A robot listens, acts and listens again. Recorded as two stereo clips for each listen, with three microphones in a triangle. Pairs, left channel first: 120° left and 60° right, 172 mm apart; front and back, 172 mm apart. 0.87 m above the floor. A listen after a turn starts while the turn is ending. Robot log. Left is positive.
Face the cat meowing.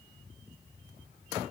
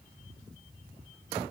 cmd idle
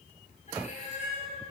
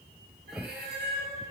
note: The cat meowing: 165° left.
cmd yaw +165
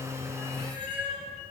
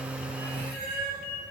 end: Facing the cat meowing, over 4 m away.